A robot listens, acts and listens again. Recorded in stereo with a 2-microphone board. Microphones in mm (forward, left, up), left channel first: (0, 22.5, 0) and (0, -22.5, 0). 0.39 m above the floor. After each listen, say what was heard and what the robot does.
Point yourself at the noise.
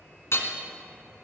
The hammering: about 65° left or 115° left. Turn 65° left.
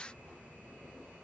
Keep listening.
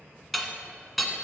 Found it: hammering, straight ahead, 1 to 2 m away.